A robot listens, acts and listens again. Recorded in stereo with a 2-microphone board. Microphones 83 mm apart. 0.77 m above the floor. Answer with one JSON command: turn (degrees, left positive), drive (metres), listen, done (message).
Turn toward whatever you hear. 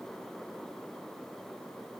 {"listen": true}
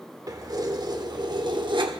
{"turn": -65}
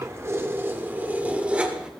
{"turn": -10}
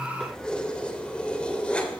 {"turn": 15}
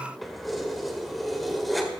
{"done": "Found it: keys jangling, straight ahead, 2 to 4 m away."}